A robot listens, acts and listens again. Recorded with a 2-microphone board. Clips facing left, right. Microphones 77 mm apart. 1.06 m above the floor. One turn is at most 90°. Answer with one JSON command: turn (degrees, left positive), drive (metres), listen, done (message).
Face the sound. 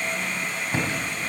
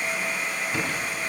{"turn": 30}
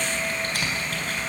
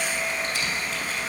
{"turn": 90}
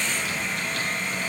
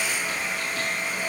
{"turn": 35}
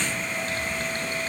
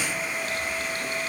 {"listen": true}
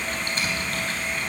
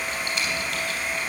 {"turn": 35}
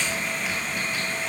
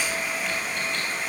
{"listen": true}
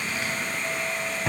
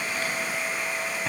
{"done": "Facing the typing on a keyboard."}